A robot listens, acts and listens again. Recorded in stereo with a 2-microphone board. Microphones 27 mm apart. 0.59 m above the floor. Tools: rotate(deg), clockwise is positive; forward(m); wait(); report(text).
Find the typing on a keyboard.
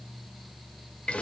wait()
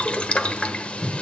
wait()
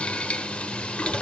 report("I can't make out typing on a keyboard, only boiling.")